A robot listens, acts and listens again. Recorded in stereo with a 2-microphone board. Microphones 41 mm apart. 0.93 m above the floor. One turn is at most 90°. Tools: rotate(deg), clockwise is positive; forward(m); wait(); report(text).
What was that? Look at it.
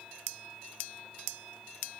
wait()
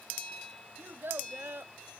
rotate(60)
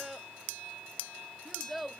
report("Facing the child speaking.")